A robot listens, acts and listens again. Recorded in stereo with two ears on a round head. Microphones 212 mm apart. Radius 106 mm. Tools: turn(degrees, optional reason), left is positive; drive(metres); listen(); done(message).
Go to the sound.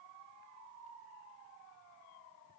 listen()
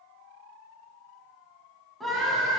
turn(degrees=30)
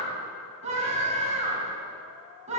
turn(degrees=-30, reason="So it is at 30° right.")
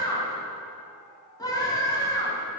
turn(degrees=15, reason="The scream is now 15° left.")
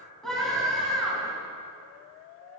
drive(metres=1.0)
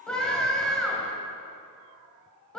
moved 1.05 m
drive(metres=1.0)
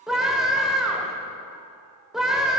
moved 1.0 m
drive(metres=1.0)
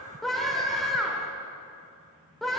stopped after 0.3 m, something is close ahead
done("Arrived at the scream, straight ahead.")